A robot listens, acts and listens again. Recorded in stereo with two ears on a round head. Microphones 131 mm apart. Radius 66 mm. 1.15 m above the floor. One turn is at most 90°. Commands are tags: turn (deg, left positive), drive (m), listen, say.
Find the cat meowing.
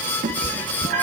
<turn deg="-60"/>
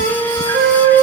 <listen/>
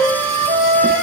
<listen/>
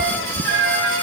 <turn deg="-55"/>
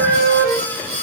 <listen/>
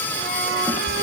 <turn deg="-20"/>
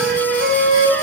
<listen/>
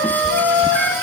<listen/>
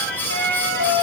<say>I heard a cat meowing from this way, but can't make it out now.</say>